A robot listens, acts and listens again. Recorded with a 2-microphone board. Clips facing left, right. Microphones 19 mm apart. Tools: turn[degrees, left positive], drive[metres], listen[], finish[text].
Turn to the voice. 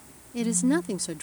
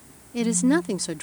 Thought: The woman speaking: about 15° right or 165° right.
Action: turn[-15]
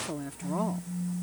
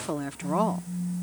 Thought: So it is at 150° right.
Action: turn[-150]
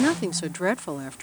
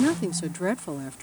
Thought: The woman speaking is now 25° left.
Action: turn[25]
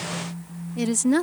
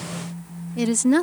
Thought: The woman speaking is now 10° right.
Action: turn[-10]
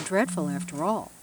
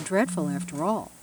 Action: finish[Facing the woman speaking.]